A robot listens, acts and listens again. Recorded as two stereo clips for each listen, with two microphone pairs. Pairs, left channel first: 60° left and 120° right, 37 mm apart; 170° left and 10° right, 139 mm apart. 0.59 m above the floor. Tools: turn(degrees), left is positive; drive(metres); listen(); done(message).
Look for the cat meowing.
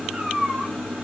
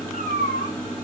turn(degrees=165)
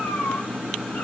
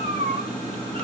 turn(degrees=40)
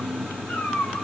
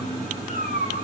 turn(degrees=15)
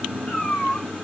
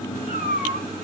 turn(degrees=10)
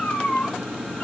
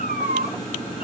done("Found it: a cat meowing, straight ahead, over 4 m away.")